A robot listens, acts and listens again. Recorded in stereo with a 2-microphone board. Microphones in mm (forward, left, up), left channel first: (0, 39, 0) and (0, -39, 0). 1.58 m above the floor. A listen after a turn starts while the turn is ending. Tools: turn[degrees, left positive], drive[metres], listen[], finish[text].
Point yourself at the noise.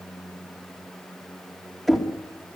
Action: turn[30]
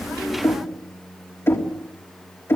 Thought: So it is at 145° left.
Action: turn[145]
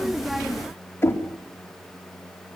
Thought: The knocking is now 30° left.
Action: turn[30]
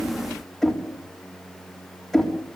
Action: finish[Found it: knocking, straight ahead, 2 to 4 m away.]